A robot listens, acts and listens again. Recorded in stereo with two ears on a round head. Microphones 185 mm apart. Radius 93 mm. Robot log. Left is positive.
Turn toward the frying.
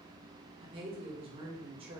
cmd idle
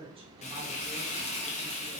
note: The frying: about 35° left or 145° left.
cmd yaw +35
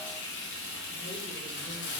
note: So it is at 105° left.
cmd yaw +105
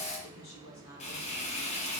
note: The frying is now 35° left.
cmd yaw +35
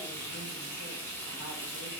note: The frying is now 10° left.
cmd yaw +10
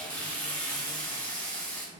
note: The frying is now 10° left.
cmd yaw +10
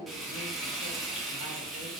end: Found it: frying, straight ahead.